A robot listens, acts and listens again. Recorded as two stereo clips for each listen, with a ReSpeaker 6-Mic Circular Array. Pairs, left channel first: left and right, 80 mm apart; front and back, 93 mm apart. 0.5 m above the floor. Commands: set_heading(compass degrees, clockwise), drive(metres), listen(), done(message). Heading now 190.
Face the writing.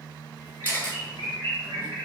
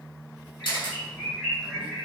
listen()
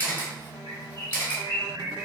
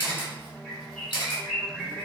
listen()
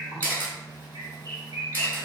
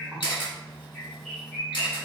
done("I can't make out writing, only a bird and a camera shutter.")